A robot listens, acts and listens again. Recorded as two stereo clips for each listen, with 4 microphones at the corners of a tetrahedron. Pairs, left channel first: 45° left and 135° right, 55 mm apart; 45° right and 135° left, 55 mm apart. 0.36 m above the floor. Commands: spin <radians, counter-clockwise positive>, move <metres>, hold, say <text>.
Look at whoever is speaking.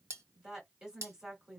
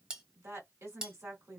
spin 2.62
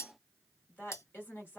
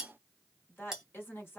say Found it: a woman speaking, straight ahead, 1 to 2 m away.